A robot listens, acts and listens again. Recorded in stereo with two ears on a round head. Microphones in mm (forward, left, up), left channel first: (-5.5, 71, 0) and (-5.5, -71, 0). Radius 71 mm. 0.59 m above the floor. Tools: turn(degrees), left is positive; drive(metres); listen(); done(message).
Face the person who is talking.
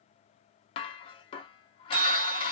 listen()
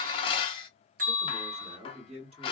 turn(degrees=-40)
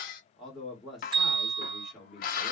done("Found it: a man speaking, straight ahead.")